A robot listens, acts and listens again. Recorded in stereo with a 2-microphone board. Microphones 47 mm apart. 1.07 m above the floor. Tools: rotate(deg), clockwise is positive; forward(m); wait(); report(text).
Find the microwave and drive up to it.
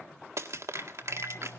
rotate(-55)
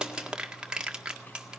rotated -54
wait()
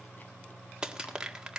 forward(1.0)
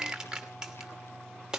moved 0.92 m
forward(1.0)
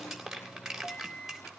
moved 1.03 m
forward(1.0)
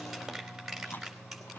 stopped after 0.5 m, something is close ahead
report("Arrived at the microwave, straight ahead.")